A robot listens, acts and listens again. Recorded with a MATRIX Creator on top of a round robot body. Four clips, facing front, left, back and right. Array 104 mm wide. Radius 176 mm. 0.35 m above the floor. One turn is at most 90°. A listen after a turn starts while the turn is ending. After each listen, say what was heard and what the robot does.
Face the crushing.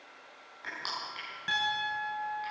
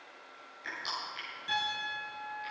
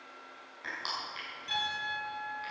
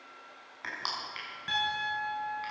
The crushing: 90° right. Turn 90° right.
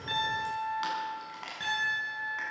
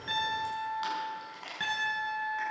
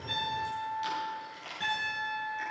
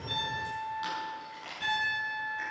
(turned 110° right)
The crushing is now 20° left. Turn 20° left.
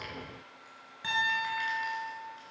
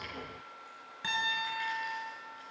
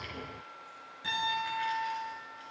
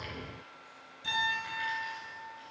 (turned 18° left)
Keep listening.
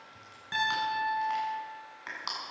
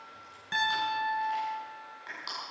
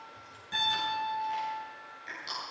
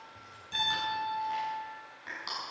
Facing the crushing, over 4 m away.